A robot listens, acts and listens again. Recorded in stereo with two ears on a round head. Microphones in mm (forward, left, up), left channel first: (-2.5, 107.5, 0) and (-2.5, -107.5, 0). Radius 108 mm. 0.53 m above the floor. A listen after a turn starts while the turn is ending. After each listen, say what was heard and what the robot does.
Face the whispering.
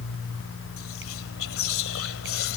The whispering: about 60° left or 120° left. Turn 60° left.
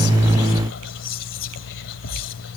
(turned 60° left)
So it is at 55° left. Turn 55° left.
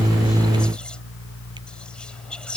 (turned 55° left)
Found it: whispering, straight ahead.